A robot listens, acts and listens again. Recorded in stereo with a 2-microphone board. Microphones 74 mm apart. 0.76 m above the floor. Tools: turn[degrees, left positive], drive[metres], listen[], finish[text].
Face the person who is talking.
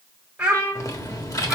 Action: turn[30]
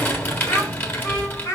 Thought: So it is at 130° left.
Action: turn[130]
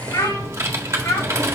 Thought: The child speaking is now 40° left.
Action: turn[40]
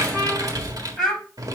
Action: finish[Found it: a child speaking, straight ahead.]